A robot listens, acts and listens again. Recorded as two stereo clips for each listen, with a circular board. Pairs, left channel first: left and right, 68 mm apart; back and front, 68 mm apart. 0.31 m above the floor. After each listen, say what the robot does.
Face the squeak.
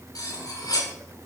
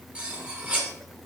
Keep listening.
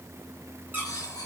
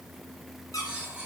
Turn 150° right.
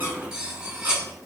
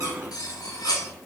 Keep listening.
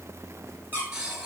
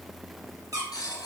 Turn 30° right.
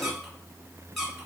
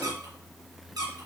Facing the squeak, 2 to 4 m away.